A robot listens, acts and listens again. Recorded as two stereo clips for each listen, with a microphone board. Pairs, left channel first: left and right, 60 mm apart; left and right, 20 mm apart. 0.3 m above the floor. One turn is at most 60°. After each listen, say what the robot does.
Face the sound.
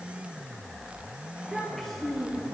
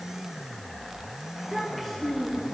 Turn 30° left.
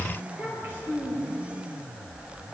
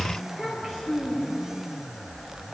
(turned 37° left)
Turn 35° right.
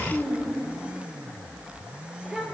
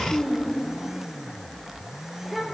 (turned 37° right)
Found it: a child speaking, straight ahead, 2 to 4 m away.